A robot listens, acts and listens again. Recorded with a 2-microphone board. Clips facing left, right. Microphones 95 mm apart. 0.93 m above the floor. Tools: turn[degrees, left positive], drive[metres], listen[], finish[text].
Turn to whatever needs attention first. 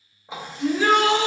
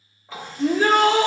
Thought: The shout: about 40° right or 140° right.
Action: turn[-40]
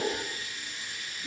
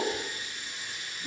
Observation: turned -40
Action: listen[]
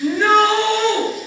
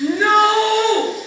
Action: finish[Found it: a shout, straight ahead, under 1 m away.]